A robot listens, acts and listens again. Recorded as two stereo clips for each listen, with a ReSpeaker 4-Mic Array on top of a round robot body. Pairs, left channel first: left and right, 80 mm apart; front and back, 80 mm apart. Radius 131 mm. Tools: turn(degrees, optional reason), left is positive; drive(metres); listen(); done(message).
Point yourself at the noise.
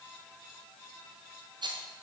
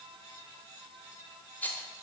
turn(degrees=-70, reason="The rattle: 70° right.")
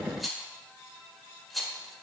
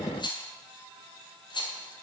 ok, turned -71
done("Facing the rattle.")